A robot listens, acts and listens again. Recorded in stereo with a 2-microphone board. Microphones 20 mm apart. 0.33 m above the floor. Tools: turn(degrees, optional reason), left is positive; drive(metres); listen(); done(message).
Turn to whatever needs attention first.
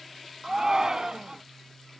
turn(degrees=-35, reason="The shout: about 35° right or 145° right.")
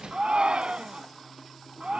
turn(degrees=-110, reason="So it is at 110° right.")
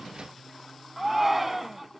turn(degrees=-10, reason="The shout is now 10° right.")
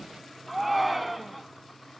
done("Found it: a shout, straight ahead.")